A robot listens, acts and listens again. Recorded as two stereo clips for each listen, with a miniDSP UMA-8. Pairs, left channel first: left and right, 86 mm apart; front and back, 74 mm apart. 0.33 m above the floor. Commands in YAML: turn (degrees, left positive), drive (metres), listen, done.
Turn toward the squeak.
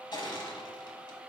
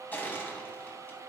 listen: true
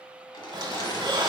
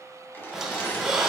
turn: -100
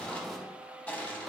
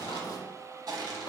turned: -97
done: "Found it: a squeak, straight ahead."